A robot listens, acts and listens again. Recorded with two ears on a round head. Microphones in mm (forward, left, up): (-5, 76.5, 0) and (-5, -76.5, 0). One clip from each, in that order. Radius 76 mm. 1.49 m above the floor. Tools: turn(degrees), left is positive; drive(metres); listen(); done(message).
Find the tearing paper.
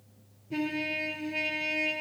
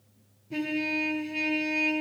listen()
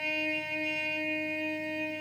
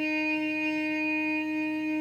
listen()
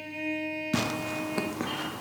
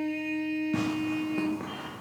turn(degrees=90)
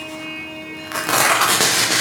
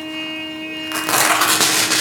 turn(degrees=-15)
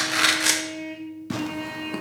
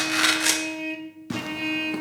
done("Found it: tearing paper, straight ahead.")